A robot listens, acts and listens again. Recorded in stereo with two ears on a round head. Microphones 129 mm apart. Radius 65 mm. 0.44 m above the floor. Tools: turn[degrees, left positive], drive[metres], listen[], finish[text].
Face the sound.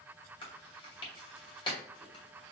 Thought: The chewing: about 35° left or 145° left.
Action: turn[35]
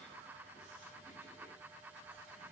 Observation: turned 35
Action: listen[]
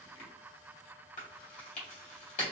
Thought: So it is at 100° left.
Action: turn[100]
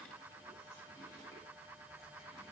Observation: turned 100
Action: listen[]
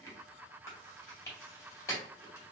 Thought: The chewing is now 25° left.
Action: turn[25]
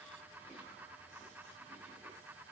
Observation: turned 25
Action: listen[]
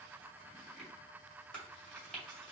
Thought: The chewing is now 10° left.
Action: turn[10]
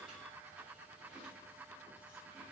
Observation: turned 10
Action: listen[]
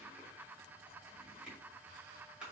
Action: listen[]
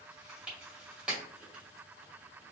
Action: finish[Facing the chewing, 2 to 4 m away.]